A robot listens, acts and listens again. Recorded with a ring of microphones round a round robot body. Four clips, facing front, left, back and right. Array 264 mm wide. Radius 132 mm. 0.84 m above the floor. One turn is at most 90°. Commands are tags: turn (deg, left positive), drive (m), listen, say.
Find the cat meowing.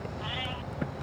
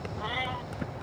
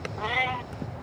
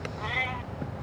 <turn deg="90"/>
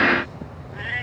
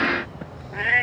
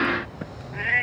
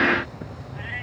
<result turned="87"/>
<turn deg="90"/>
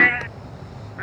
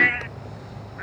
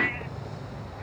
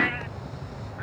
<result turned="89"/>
<turn deg="15"/>
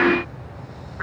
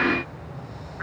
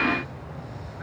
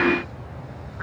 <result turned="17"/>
<turn deg="10"/>
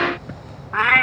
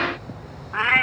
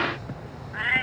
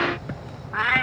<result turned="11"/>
<turn deg="15"/>
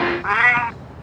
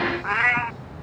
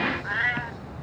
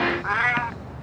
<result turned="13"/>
<say>Facing the cat meowing.</say>